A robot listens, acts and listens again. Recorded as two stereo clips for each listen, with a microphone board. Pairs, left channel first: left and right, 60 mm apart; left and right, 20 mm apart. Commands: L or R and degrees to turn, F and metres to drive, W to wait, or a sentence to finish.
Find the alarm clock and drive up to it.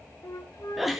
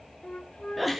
W
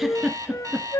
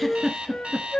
R90
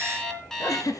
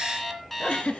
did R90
L10
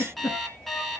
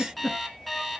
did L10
F1.0
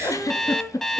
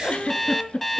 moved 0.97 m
F1.0
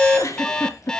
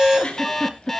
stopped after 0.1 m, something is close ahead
L10
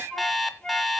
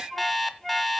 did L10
I am next to the alarm clock.